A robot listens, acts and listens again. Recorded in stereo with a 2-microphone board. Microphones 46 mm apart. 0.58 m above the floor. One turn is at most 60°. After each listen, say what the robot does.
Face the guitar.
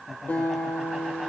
Turn 40° left.
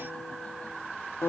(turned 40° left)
Turn 60° left.
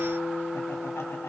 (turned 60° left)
Turn 60° left.
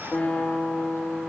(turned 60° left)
Turn 20° left.
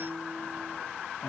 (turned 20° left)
Turn 10° left.
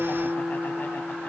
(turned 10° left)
Found it: a guitar, straight ahead.